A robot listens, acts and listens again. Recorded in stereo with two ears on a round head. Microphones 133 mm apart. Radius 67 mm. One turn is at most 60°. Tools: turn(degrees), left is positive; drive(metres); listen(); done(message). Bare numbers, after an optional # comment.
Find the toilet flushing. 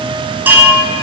listen()
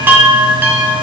listen()
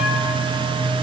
done("I can't make out a toilet flushing, only a chime.")